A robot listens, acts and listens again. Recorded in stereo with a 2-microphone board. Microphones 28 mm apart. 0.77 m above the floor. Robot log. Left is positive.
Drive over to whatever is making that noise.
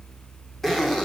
cmd yaw +30
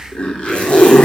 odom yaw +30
note: So it is at 140° left.
cmd yaw +140
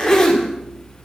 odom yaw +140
note: The zipper is now 20° left.
cmd yaw +20
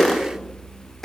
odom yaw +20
cmd fwd 1.0
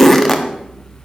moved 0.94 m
note: The zipper is now 10° left.
cmd yaw +10
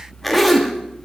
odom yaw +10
cmd fwd 1.0
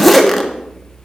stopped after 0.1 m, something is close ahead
end: Arrived at the zipper, straight ahead.